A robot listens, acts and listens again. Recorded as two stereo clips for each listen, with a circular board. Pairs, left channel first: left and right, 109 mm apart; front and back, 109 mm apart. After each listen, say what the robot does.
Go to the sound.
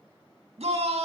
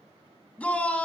Turn 75° right.
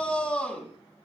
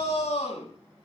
Turn 10° left.
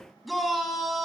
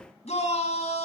Drive 1.0 m forward.
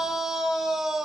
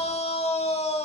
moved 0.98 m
Drive 1.0 m forward.
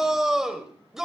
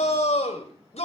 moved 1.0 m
Drive 1.0 m forward.
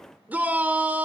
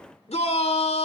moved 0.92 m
Turn 15° right.
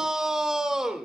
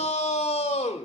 Drive 1.0 m forward.
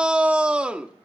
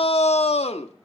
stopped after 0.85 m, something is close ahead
Turn 10° right.
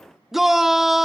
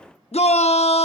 Arrived at the shout, straight ahead.